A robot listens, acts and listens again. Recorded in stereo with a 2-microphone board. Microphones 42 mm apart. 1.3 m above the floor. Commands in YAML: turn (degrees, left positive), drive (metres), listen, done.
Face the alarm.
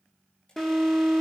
turn: 30
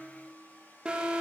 turn: -15
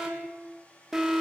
done: "Facing the alarm, 2 to 4 m away."